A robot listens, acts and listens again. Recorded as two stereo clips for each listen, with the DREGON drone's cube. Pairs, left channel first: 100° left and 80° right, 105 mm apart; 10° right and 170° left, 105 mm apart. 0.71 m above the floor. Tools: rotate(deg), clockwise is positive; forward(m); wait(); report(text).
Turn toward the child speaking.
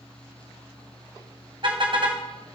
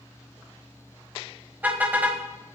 wait()
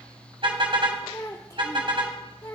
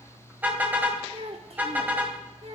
rotate(-155)
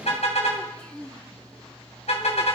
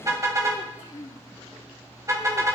rotate(-20)
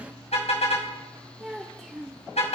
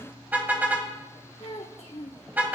report("Facing the child speaking.")